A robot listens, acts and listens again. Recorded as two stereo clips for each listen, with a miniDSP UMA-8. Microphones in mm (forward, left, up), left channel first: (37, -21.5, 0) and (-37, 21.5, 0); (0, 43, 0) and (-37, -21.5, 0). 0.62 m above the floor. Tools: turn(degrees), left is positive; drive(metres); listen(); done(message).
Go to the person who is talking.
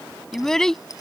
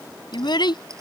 turn(degrees=55)
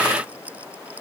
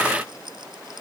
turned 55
listen()
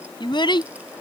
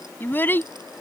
drive(metres=1.0)
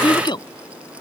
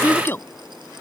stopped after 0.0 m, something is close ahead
done("Something is in my way. I am facing the child speaking but have not reached it.")